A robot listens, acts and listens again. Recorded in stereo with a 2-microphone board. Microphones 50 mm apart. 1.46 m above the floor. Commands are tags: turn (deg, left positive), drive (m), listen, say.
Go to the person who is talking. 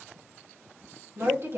<turn deg="-60"/>
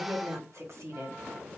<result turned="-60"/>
<turn deg="-60"/>
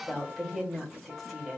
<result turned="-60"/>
<drive m="1.0"/>
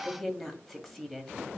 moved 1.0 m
<drive m="1.0"/>
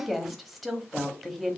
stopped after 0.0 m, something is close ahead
<say>I am next to the woman speaking.</say>